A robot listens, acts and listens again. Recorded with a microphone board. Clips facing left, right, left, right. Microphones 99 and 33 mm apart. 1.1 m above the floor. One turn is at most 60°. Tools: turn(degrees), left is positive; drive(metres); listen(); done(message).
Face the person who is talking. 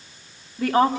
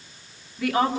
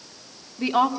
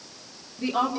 turn(degrees=35)
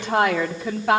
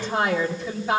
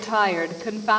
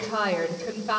turn(degrees=60)
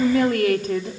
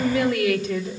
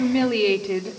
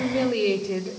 turn(degrees=50)
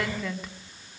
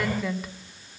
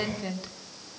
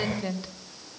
done("Facing the woman speaking.")